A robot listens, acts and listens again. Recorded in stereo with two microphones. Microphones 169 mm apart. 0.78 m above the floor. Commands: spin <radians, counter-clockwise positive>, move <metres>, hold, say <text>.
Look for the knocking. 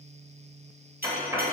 spin -0.26
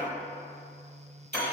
hold
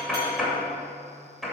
say Found it: knocking, straight ahead.